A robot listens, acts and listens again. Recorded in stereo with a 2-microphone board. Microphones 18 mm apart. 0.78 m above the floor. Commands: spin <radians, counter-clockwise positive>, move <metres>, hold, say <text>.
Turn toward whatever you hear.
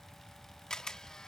spin 0.79
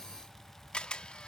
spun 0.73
spin 1.57
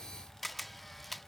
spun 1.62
say Facing the camera shutter.